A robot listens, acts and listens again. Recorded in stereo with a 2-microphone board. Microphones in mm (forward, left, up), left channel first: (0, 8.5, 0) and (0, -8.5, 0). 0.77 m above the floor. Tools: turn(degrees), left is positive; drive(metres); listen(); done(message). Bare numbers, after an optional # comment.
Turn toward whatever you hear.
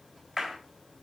turn(-30)
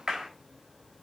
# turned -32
# So it is at 140° right.
turn(-140)
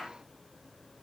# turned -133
done("Facing the clap, 2 to 4 m away.")